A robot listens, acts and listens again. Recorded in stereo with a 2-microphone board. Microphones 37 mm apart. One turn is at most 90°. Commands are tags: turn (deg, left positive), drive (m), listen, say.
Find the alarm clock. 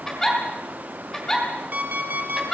<turn deg="-50"/>
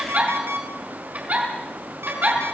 <turn deg="-80"/>
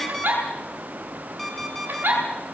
<say>Facing the alarm clock.</say>